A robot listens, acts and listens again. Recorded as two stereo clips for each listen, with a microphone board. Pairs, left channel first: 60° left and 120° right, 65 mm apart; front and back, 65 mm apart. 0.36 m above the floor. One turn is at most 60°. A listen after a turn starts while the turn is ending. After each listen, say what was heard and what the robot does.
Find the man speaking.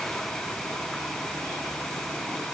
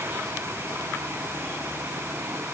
Keep listening.
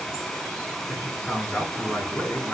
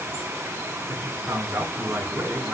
The man speaking: 135° left. Turn 60° left.
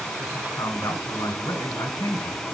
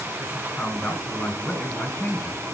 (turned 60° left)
The man speaking is now 75° left. Turn 60° left.
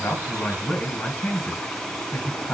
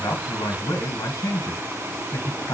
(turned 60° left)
Found it: a man speaking, straight ahead, 2 to 4 m away.